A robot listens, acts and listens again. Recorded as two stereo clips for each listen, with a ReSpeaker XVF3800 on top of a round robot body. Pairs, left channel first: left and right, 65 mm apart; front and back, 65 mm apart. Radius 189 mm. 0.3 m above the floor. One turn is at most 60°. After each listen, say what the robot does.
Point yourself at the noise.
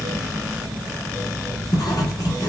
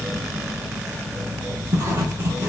Turn 60° left.
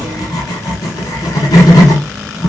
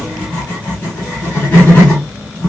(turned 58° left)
Turn 60° left.
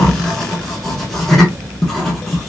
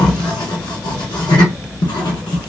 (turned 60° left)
Facing the writing, under 1 m away.